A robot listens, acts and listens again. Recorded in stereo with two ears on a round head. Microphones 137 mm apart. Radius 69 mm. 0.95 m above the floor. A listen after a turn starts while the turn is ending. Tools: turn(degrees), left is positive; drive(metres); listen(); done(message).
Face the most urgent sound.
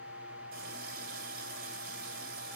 listen()
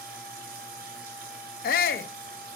turn(degrees=65)
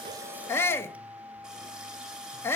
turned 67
turn(degrees=15)
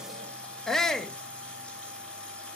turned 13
done("Facing the shout, under 1 m away.")